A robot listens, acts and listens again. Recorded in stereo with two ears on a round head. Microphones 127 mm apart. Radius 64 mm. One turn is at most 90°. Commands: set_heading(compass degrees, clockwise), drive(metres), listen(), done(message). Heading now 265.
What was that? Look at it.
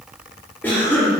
set_heading(235)
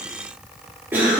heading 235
set_heading(250)
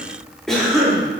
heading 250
done("Found it: a cough, straight ahead.")